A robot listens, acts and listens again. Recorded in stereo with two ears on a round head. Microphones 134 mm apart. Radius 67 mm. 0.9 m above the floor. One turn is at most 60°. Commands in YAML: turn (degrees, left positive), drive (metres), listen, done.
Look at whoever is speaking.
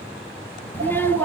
turn: 30
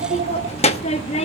turn: 60
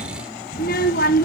turn: 60
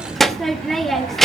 done: "Found it: a child speaking, straight ahead."